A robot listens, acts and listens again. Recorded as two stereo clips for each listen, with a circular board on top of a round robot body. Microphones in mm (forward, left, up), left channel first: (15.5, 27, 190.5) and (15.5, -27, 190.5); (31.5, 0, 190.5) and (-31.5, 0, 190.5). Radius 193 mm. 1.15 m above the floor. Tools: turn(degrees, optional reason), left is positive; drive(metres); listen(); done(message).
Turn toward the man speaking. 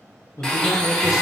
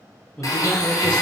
turn(degrees=75, reason="The man speaking: 75° left.")
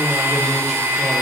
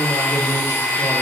listen()
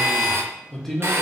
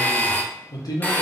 done("Facing the man speaking.")